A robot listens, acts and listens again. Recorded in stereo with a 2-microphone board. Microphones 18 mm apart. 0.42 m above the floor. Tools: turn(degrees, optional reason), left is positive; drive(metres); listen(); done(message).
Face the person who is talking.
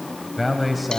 turn(degrees=30)
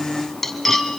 listen()
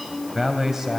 turn(degrees=-30, reason="So it is at 30° right.")
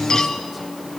listen()
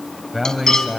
turn(degrees=-10, reason="The man speaking is now 10° right.")
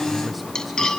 listen()
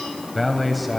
done("Found it: a man speaking, straight ahead.")